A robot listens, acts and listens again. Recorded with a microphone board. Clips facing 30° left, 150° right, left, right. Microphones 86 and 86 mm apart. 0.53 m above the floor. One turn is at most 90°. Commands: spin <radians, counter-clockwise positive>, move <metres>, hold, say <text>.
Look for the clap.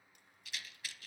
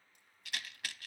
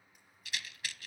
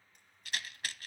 hold
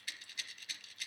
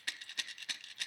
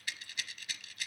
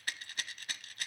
hold
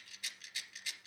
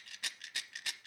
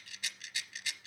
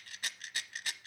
say I can't make out a clap, only a rattle.